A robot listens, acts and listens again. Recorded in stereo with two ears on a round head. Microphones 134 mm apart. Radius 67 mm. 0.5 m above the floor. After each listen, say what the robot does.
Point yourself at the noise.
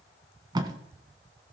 Turn 30° right.
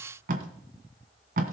Turn 120° right.
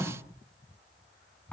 Turn 10° left.
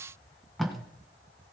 Found it: tape being pulled, straight ahead, 1 to 2 m away.